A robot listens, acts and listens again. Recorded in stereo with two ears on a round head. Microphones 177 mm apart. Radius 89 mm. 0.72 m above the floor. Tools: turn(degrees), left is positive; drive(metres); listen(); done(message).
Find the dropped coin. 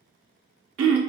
listen()
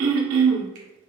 listen()
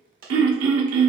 turn(degrees=-45)
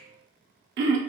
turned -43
listen()
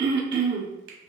done("I heard a dropped coin, but can't make it out now. It was about 5° right or 90° right.")